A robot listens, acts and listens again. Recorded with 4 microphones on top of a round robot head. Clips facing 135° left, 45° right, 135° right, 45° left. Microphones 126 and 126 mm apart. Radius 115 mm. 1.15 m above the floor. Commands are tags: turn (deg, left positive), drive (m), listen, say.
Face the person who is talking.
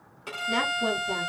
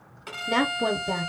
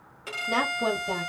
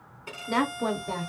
<turn deg="-55"/>
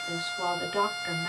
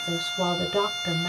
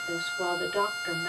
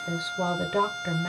<say>Found it: a woman speaking, straight ahead.</say>